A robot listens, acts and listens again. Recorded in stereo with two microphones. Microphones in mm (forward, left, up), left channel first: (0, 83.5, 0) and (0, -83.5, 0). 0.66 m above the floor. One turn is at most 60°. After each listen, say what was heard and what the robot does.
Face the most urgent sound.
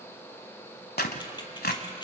Keep listening.
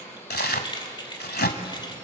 Keep listening.
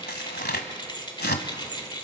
I can't make out anything urgent, only tearing paper and keys jangling.